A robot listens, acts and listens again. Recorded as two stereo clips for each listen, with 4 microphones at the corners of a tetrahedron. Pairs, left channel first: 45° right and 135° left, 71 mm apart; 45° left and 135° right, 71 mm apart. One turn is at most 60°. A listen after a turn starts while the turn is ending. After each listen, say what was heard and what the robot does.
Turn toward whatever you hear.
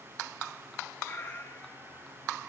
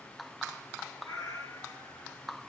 The cat meowing: 10° left. Turn 10° left.
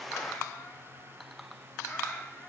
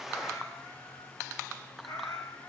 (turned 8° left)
The cat meowing is now 20° left. Turn 20° left.
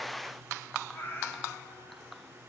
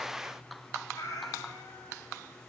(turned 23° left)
The cat meowing is now 15° left. Turn 15° left.
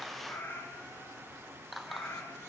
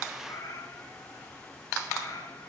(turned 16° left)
The cat meowing is now 15° left. Turn 15° left.
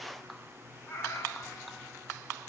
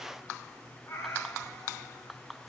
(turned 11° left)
Found it: a cat meowing, straight ahead, 2 to 4 m away.